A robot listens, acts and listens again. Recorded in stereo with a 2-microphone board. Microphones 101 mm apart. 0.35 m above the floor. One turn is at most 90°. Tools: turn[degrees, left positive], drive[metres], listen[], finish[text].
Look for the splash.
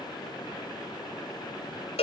Action: listen[]
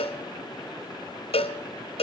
Action: listen[]
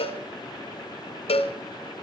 Action: finish[I can't make out a splash, only a cowbell.]